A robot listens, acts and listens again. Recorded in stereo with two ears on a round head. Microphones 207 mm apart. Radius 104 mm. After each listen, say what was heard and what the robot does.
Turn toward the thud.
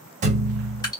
The thud: about 30° right or 150° right. Turn 30° right.
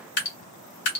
Keep listening.
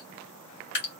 I heard a thud, but can't make it out now. It was about straight ahead or 120° right.